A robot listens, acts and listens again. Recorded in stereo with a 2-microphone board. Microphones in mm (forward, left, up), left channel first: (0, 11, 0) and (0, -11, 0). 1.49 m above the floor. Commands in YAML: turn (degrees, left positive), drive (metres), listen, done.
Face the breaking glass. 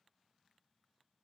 listen: true
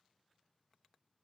listen: true
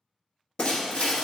turn: 60
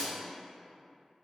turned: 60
turn: 25
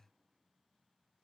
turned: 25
done: "Facing where the breaking glass came from. I can't hear it now."